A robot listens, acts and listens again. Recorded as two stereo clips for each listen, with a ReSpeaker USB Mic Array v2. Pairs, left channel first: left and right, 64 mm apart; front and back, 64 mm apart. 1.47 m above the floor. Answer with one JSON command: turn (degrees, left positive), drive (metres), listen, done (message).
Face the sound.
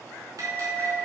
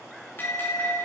{"turn": -60}
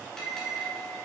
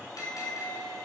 {"turn": 10}
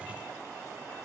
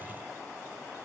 {"listen": true}
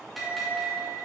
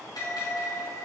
{"done": "Facing the bell, over 4 m away."}